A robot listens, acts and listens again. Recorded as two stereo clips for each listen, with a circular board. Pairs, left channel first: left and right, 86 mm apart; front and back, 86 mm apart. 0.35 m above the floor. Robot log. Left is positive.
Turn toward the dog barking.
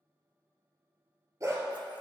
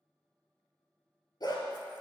note: The dog barking: 35° right.
cmd yaw -35
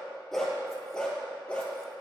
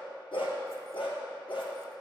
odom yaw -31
note: The dog barking is now 15° left.
cmd yaw +15
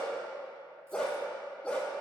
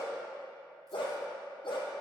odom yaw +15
note: The dog barking is now 10° left.
cmd yaw +10
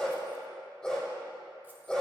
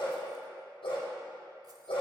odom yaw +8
end: Facing the dog barking, 2 to 4 m away.